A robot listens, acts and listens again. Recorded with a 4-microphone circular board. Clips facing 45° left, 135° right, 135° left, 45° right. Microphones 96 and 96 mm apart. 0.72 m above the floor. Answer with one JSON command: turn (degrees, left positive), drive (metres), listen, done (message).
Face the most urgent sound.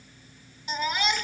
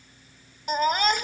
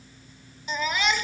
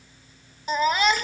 {"turn": -90}
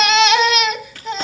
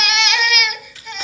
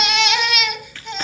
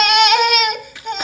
{"turn": -10}
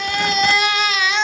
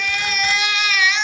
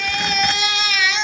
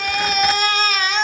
{"done": "Facing the baby crying."}